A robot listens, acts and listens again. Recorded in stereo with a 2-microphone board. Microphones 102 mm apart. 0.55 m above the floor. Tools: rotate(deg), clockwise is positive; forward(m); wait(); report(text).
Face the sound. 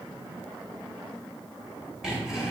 rotate(30)
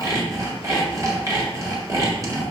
rotate(145)
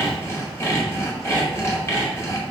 rotate(-30)
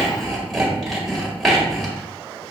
report("Facing the sawing.")